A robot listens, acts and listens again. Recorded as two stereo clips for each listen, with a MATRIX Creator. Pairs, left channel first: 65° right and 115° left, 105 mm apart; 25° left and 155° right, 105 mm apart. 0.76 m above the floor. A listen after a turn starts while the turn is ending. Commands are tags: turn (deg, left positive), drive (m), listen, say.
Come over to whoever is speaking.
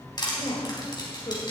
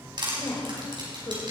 <turn deg="-30"/>
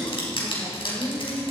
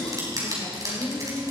<turn deg="-15"/>
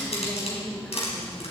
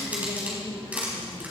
<drive m="1.0"/>
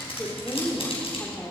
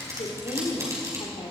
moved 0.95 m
<drive m="1.0"/>
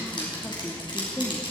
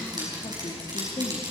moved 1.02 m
<drive m="1.0"/>
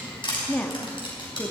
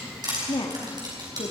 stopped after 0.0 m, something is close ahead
<turn deg="10"/>
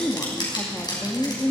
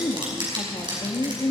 <say>I am next to the woman speaking.</say>